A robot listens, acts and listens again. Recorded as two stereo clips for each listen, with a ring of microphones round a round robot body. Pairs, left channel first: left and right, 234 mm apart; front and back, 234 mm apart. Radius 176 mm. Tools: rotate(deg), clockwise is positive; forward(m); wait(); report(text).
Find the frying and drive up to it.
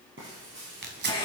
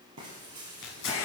rotate(145)
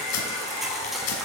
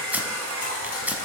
wait()
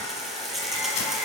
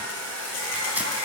wait()
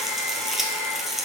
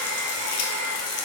forward(1.0)
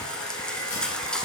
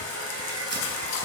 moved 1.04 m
forward(1.0)
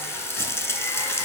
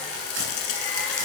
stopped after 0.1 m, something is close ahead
rotate(-10)
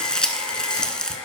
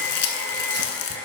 report("I am next to the frying.")